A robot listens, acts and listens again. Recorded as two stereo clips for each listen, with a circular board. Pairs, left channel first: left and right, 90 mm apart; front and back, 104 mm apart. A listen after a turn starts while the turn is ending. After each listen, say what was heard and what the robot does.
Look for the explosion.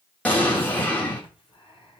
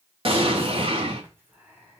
The explosion: 160° left. Turn 160° left.
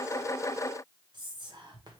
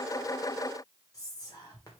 I heard an explosion from this way, but can't make it out now.